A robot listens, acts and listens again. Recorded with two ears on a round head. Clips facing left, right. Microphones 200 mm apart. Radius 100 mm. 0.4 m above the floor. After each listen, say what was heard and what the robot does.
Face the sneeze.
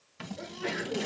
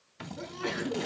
The sneeze: about 55° right or 125° right. Turn 55° right.
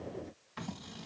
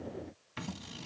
Keep listening.
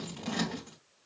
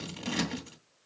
I heard a sneeze, but can't make it out now. It was about straight ahead or 70° right.